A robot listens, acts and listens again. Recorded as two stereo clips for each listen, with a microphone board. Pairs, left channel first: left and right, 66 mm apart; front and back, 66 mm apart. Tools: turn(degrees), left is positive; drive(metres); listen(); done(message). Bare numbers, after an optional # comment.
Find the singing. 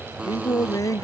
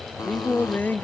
# The singing: 60° left.
turn(60)
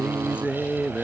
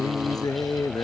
# The singing is now 20° right.
turn(-20)
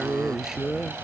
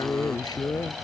done("Found it: singing, straight ahead.")